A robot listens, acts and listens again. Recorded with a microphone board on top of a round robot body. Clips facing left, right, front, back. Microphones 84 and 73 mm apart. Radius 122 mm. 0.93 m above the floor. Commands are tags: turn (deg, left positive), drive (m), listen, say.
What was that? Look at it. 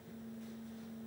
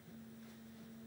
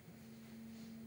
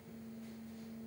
<listen/>
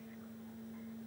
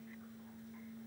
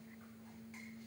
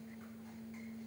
<listen/>
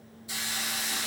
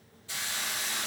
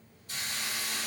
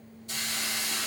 <turn deg="165"/>
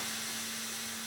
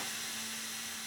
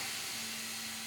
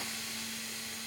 <say>Found it: a hiss, straight ahead.</say>